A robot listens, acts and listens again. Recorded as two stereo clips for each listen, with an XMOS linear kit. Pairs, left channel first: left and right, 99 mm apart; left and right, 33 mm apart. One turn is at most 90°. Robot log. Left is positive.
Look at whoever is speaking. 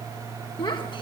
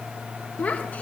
note: The child speaking: about 50° left or 130° left.
cmd yaw +50
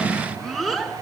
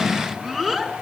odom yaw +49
end: Facing the child speaking.